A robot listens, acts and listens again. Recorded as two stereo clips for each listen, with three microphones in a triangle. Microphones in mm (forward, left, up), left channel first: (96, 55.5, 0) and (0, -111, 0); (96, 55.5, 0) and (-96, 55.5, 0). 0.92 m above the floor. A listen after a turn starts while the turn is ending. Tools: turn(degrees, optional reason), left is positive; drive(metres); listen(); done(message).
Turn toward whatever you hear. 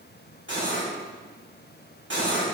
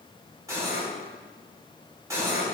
turn(degrees=-105, reason="The cutlery clinking: 105° right.")
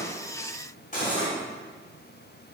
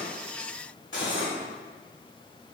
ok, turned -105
turn(degrees=10, reason="The cutlery clinking is now 10° left.")
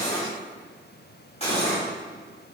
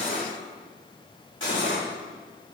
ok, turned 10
done("Facing the cutlery clinking.")